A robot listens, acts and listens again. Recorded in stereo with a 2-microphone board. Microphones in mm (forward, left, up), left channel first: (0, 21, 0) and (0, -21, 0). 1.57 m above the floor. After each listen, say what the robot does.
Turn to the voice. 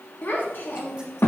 Turn 65° left.
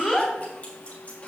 Turn 20° left.
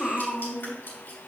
Turn 25° left.
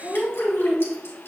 Turn 20° left.
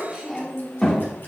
Turn 10° left.
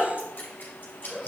Found it: a child speaking, straight ahead.